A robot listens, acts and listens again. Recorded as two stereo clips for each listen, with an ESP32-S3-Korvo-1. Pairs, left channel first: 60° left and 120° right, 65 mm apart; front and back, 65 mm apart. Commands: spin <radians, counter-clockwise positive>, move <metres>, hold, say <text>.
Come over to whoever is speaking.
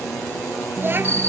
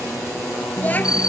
spin -1.13
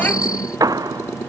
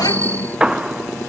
hold
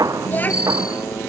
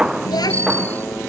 move 1.0
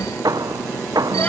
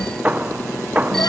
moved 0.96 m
hold
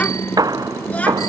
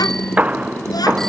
spin -0.17
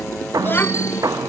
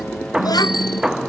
move 1.0
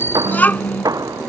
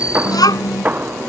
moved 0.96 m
move 1.0
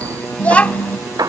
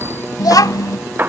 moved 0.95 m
move 1.0
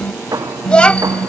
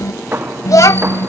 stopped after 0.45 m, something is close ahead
spin -0.17
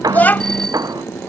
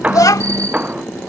say Arrived at the child speaking, straight ahead.